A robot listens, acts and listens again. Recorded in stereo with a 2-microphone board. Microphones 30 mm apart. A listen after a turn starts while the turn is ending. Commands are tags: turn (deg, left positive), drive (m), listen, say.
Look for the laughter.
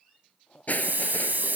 <turn deg="40"/>
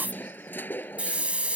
<listen/>
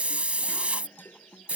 <listen/>
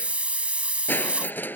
<say>I heard laughter, but can't make it out now. It was about straight ahead or 100° left.</say>